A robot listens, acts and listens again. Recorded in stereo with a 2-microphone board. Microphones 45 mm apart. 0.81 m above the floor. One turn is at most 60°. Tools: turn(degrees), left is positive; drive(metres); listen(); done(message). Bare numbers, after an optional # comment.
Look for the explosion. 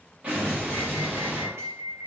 # The explosion: about 30° right or 150° right.
turn(-30)
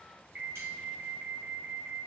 listen()
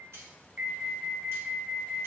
done("I heard an explosion, but can't make it out now. It was about straight ahead or 120° right.")